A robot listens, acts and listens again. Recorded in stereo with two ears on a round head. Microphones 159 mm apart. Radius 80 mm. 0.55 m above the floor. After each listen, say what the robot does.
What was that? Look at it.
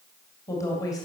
Turn 20° left.
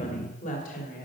Turn 130° left.
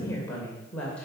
Found it: a woman speaking, straight ahead.